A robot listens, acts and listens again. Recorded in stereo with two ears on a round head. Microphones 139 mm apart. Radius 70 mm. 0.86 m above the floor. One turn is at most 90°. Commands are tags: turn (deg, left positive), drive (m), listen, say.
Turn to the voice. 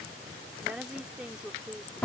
<turn deg="-30"/>
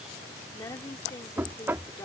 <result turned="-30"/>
<turn deg="20"/>
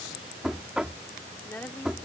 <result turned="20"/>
<turn deg="10"/>
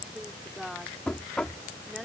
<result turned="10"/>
<say>Found it: a woman speaking, straight ahead.</say>